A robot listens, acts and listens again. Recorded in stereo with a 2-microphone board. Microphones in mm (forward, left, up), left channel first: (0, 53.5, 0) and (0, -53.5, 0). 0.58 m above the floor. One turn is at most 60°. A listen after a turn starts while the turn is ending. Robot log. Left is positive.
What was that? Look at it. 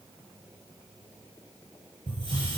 note: The hiss: about 60° right or 120° right.
cmd yaw -60
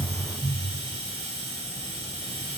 note: So it is at 60° right.
cmd yaw -60
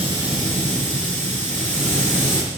note: The hiss is now 20° left.
cmd yaw +20
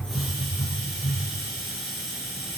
end: Facing the hiss, over 4 m away.